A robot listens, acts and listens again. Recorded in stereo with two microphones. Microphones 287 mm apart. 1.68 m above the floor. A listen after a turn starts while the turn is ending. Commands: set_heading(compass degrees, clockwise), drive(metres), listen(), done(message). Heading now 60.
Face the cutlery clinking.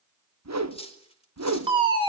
set_heading(40)
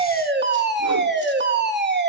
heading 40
listen()
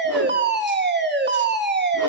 listen()
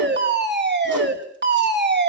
done("I heard cutlery clinking, but can't make it out now. It was about straight ahead or 140° left.")